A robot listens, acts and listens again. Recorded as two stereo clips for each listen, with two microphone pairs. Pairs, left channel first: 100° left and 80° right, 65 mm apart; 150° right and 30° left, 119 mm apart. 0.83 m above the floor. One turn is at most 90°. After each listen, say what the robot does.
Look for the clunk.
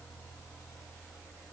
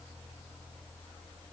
Keep listening.
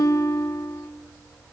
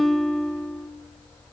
Keep listening.
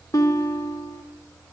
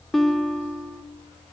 I can't make out a clunk, only a guitar.